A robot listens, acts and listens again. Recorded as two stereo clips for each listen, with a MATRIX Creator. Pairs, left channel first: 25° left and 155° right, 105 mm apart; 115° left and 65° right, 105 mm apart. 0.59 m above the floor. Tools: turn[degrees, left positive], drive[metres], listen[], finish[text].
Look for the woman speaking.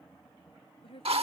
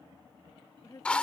Thought: The woman speaking: 55° left.
Action: turn[55]
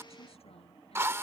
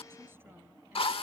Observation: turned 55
Action: listen[]
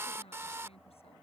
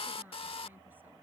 Action: listen[]
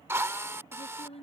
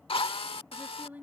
Thought: The woman speaking is now 10° left.
Action: turn[10]
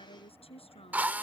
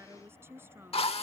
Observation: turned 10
Action: finish[Found it: a woman speaking, straight ahead.]